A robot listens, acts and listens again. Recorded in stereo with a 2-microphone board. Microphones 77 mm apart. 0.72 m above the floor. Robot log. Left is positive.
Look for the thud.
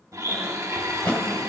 note: The thud: about 15° left or 165° left.
cmd yaw +15
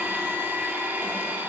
cmd idle
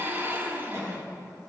end: I heard a thud, but can't make it out now. It was about straight ahead or 150° left.